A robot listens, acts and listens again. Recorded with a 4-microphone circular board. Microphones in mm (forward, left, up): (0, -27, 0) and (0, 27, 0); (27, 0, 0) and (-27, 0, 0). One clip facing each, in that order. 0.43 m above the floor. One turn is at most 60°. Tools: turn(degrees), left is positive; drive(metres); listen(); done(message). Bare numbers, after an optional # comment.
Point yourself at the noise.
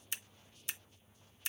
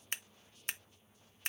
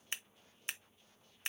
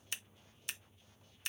# The scissors: 55° left.
turn(55)
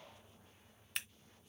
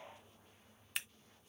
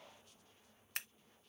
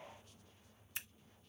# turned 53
done("Found it: scissors, straight ahead.")